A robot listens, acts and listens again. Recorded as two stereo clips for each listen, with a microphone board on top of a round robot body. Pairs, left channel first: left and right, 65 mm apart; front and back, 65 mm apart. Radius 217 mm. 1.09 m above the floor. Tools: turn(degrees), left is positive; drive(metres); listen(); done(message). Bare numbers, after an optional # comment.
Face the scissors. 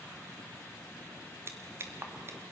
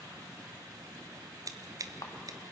# The scissors: 145° right.
turn(-145)
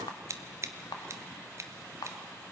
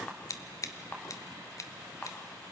# The scissors is now 45° right.
turn(-45)
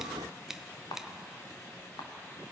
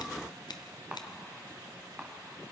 done("Facing the scissors.")